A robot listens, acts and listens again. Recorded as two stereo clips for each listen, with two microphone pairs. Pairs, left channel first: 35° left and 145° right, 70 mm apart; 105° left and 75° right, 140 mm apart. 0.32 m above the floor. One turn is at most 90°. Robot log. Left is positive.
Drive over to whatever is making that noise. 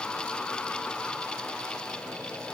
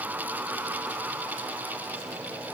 cmd idle
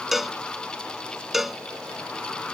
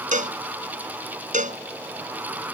note: The cowbell: 60° right.
cmd yaw -60
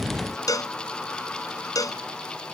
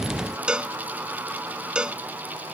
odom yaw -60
cmd fwd 1.0
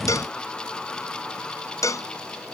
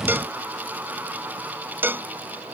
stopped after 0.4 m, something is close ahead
end: Blocked. The cowbell is further on, straight ahead.